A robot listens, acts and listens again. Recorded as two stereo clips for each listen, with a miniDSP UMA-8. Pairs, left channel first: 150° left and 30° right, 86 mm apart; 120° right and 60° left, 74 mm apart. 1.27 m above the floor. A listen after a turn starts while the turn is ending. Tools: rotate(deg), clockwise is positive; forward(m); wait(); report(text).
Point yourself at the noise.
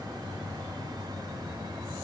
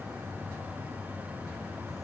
wait()
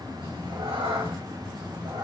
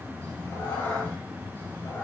rotate(55)
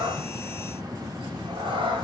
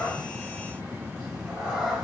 rotate(20)
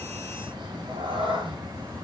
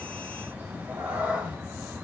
rotate(10)
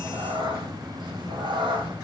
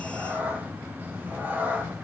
report("Facing the cat meowing.")